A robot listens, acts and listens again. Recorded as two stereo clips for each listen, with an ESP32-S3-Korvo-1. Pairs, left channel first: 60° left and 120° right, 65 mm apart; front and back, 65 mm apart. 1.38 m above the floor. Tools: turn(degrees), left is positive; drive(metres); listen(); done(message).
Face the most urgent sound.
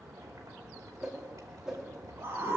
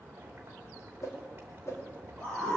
turn(degrees=-70)
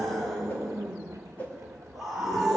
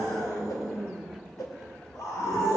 turn(degrees=-30)
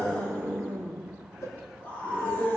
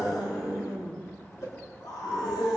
done("Found it: a scream, straight ahead.")